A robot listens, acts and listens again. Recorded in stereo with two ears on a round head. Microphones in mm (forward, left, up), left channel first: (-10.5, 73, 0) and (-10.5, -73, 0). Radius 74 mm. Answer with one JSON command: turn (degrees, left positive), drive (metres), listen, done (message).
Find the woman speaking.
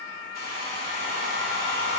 {"listen": true}
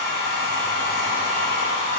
{"listen": true}
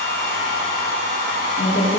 {"turn": 50}
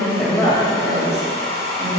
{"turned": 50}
{"turn": 20}
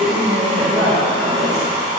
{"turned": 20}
{"done": "Facing the woman speaking, 2 to 4 m away."}